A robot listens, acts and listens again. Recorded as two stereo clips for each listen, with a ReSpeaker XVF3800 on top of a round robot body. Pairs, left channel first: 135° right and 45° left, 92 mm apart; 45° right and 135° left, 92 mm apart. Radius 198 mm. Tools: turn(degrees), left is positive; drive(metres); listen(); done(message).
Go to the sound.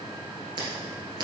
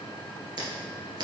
turn(degrees=90)
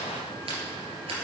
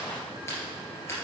listen()
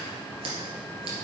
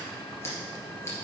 turn(degrees=15)
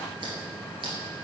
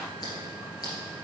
listen()
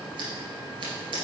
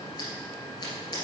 drive(metres=1.0)
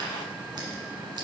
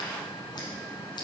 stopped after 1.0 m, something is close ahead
listen()
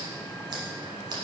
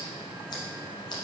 done("I am next to the scissors.")